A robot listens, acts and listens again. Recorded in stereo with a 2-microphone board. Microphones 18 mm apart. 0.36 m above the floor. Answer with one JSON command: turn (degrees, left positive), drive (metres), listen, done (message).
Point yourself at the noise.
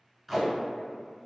{"turn": 30}
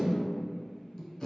{"turn": 150}
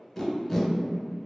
{"turn": 15}
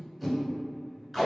{"done": "Facing the tape being pulled."}